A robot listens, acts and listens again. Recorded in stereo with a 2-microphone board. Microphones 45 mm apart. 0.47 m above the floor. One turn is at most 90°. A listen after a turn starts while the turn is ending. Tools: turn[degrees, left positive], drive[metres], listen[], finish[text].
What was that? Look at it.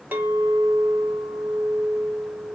Thought: The clink: about 45° right or 135° right.
Action: turn[-45]
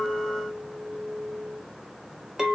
Thought: So it is at 10° right.
Action: turn[-10]
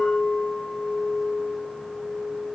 Action: finish[Found it: a clink, straight ahead, 1 to 2 m away.]